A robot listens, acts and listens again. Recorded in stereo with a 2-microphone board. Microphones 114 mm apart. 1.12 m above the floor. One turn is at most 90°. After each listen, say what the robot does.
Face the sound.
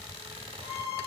Turn 55° left.
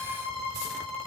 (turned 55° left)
Facing the violin, 2 to 4 m away.